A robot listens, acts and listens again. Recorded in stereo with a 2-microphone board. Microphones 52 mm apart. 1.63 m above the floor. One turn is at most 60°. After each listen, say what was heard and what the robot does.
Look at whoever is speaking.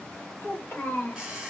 The child speaking: about 45° left or 135° left. Turn 45° left.
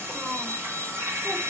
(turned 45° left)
Keep listening.
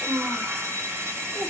So it is at 20° right. Turn 20° right.
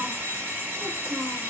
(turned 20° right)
Keep listening.
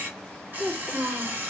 The child speaking is now 15° right. Turn 15° right.
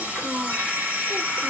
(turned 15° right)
Keep listening.
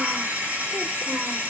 Keep listening.
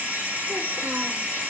I heard a child speaking from this way, but can't make it out now.